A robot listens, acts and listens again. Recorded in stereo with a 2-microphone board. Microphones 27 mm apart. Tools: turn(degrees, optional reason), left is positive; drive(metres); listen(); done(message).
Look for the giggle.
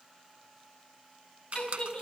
turn(degrees=40, reason="The giggle: about 40° left or 140° left.")
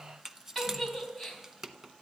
done("Facing the giggle, 2 to 4 m away.")